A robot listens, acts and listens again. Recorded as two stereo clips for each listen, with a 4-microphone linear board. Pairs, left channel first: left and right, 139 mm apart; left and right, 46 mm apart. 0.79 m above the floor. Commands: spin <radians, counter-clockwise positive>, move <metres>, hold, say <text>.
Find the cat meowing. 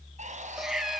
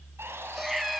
spin 0.52
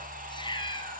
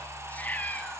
spin 2.53
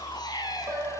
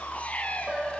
spin 0.52
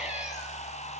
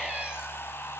hold
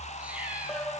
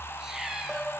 spin -0.17
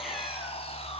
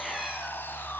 hold
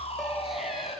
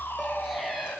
hold
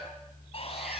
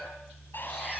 say I heard a cat meowing from this way, but can't make it out now.